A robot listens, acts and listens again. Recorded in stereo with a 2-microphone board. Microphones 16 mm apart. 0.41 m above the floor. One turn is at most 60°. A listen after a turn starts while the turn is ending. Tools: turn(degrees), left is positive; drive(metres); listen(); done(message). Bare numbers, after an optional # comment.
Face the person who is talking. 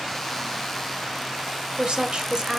# The woman speaking: about 55° right or 125° right.
turn(-55)
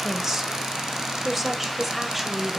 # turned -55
# So it is at 10° right.
turn(-10)
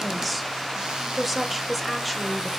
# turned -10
done("Found it: a woman speaking, straight ahead, 1 to 2 m away.")